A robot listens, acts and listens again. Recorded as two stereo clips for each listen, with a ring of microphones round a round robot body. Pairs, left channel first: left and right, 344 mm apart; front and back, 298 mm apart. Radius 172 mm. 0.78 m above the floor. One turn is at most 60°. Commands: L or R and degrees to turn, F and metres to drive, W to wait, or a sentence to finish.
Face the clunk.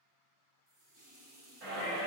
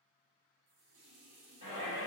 W
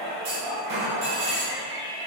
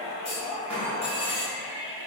R60
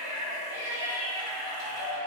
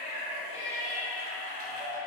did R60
R20
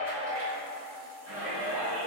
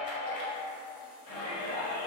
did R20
Facing where the clunk came from. I can't hear it now.